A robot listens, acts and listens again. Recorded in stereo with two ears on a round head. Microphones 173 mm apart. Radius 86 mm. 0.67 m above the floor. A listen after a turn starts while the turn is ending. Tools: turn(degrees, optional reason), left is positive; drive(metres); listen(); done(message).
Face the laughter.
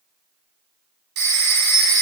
listen()
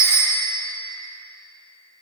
listen()
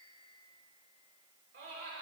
turn(degrees=-65, reason="The laughter: about 65° right or 115° right.")
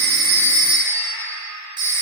turn(degrees=-20, reason="So it is at 20° right.")
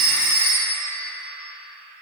listen()
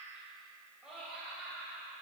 done("Found it: laughter, straight ahead.")